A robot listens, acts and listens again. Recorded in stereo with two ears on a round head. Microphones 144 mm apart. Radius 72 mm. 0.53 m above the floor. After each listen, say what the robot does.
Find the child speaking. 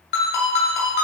Keep listening.
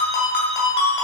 Keep listening.
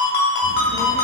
Turn 55° left.
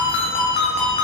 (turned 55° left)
Found it: a child speaking, straight ahead.